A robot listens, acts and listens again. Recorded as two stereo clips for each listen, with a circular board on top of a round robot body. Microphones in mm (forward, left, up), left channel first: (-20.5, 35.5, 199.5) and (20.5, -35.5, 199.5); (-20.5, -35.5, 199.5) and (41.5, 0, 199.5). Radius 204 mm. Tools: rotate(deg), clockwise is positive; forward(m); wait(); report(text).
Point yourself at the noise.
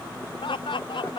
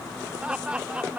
rotate(-105)
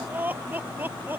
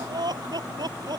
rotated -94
report("Facing the laughter.")